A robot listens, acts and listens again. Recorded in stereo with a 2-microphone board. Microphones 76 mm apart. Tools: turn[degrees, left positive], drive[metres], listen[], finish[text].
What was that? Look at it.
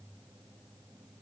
Action: listen[]
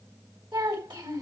Action: turn[-90]
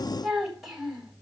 Action: finish[Found it: a child speaking, straight ahead.]